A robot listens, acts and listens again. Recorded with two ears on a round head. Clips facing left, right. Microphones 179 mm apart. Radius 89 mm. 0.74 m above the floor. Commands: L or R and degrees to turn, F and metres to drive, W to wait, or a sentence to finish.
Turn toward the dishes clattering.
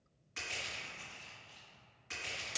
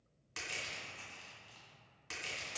W
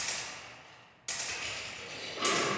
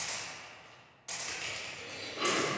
R40
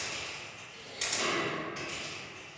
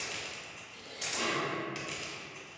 Found it: dishes clattering, straight ahead, 1 to 2 m away.